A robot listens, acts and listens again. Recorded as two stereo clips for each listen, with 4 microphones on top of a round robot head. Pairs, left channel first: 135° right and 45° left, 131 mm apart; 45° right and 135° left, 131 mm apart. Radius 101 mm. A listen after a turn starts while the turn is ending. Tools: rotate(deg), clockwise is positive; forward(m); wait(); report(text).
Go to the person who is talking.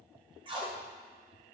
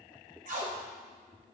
wait()
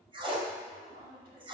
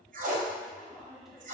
rotate(-45)
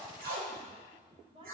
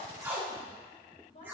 forward(1.0)
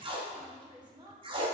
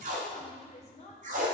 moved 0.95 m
rotate(10)
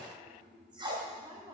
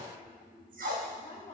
forward(1.0)
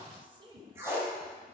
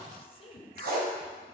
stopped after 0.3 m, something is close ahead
report("I am next to the woman speaking.")